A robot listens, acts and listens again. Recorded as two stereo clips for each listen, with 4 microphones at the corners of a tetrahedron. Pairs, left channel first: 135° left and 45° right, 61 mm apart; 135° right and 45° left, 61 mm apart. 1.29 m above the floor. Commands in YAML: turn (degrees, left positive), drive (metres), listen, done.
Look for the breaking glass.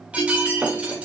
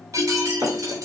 turn: 20
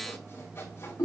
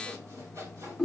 done: "Facing where the breaking glass came from. I can't hear it now."